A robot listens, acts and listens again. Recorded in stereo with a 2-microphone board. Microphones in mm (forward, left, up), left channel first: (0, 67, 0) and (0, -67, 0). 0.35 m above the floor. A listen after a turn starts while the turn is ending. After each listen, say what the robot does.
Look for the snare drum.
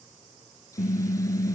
Keep listening.
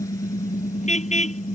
Keep listening.
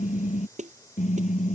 Turn 65° right.
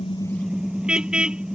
Keep listening.
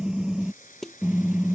Facing the snare drum.